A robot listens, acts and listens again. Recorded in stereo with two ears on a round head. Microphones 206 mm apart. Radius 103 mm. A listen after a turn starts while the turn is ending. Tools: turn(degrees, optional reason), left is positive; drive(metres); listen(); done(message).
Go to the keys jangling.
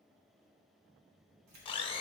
turn(degrees=-90)
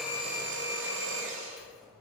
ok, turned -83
drive(metres=1.0)
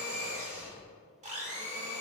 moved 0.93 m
listen()
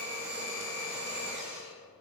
listen()
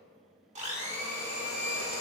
done("I heard keys jangling from this way, but can't make it out now. I did not reach it.")